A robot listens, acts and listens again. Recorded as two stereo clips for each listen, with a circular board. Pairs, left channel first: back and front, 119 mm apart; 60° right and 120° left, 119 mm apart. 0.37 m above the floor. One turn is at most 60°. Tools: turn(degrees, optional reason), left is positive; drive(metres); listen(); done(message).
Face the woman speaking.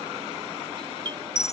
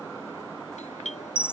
listen()
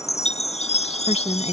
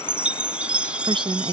turn(degrees=60, reason="The woman speaking: 160° left.")
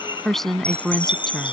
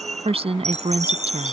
turn(degrees=60, reason="The woman speaking is now 95° left.")
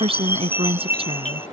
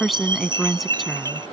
turn(degrees=30, reason="The woman speaking is now 30° left.")
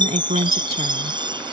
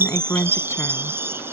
turn(degrees=10, reason="The woman speaking is now 10° left.")
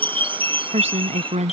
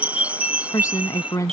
done("Facing the woman speaking.")